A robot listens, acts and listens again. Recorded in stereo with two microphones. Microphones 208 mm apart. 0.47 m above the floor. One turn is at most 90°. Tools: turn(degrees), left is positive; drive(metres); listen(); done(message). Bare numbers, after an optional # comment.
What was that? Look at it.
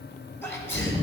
turn(30)
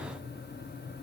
listen()
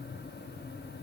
done("I heard a sneeze, but can't make it out now. It was about 20° right or 140° left.")